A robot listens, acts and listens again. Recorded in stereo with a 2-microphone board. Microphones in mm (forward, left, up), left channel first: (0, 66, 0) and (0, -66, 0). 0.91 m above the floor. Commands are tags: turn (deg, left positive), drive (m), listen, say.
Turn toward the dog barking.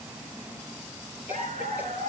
<turn deg="-70"/>
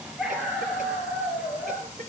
<say>Facing the dog barking, over 4 m away.</say>